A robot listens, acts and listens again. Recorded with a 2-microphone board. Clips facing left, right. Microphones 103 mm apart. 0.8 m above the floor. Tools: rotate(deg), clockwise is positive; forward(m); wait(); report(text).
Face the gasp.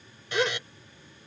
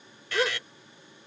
rotate(30)
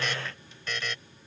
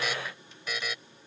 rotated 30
wait()
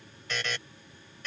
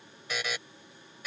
report("I heard a gasp, but can't make it out now. It was about 25° left or 145° right.")